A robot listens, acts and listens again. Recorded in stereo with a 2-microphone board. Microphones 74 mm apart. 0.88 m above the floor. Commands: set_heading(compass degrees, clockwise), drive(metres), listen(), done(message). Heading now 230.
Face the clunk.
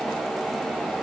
listen()
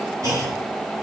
set_heading(280)
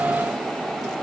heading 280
listen()
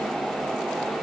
done("I heard a clunk, but can't make it out now. It was about straight ahead or 80° right.")